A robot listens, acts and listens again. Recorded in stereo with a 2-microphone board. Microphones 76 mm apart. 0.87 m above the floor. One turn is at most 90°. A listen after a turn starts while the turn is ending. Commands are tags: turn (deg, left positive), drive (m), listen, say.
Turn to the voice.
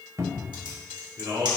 <turn deg="-60"/>
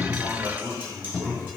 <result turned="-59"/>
<turn deg="-40"/>
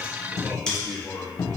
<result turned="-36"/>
<turn deg="10"/>
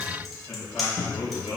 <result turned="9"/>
<turn deg="10"/>
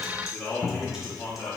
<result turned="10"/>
<say>Facing the man speaking.</say>